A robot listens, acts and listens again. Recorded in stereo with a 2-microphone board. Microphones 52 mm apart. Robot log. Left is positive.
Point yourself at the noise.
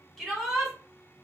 cmd yaw +30
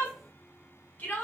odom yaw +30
note: So it is at 145° left.
cmd yaw +145
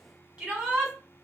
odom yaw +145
note: The shout is now 25° right.
cmd yaw -25
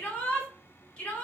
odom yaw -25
note: The shout is now 25° left.
cmd yaw +25
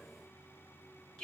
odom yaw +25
note: The shout is now 10° left.
cmd yaw +10
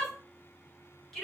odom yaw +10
end: Facing the shout.